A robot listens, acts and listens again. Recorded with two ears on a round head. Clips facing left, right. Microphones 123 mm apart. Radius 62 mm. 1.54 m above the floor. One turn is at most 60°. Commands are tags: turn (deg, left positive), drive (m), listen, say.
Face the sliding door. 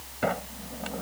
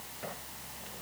<turn deg="60"/>
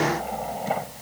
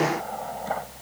<turn deg="15"/>
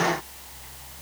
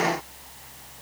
<listen/>
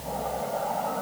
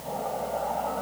<say>Found it: a sliding door, straight ahead.</say>